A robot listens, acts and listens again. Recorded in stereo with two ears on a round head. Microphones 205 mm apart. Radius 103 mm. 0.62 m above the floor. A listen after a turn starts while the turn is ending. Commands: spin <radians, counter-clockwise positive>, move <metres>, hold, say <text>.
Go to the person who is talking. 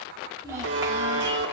spin -0.52
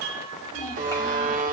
spin 0.26
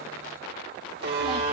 hold
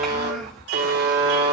move 1.0
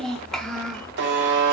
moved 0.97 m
move 1.0
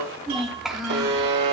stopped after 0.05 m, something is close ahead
say Arrived at the child speaking, straight ahead.